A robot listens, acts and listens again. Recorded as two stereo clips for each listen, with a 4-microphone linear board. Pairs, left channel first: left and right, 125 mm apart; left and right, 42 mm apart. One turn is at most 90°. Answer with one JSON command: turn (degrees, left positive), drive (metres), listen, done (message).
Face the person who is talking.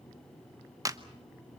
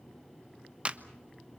{"listen": true}
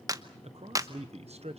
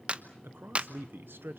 {"turn": -65}
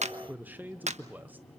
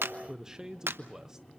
{"turn": -15}
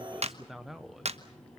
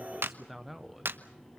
{"done": "Facing the man speaking, under 1 m away."}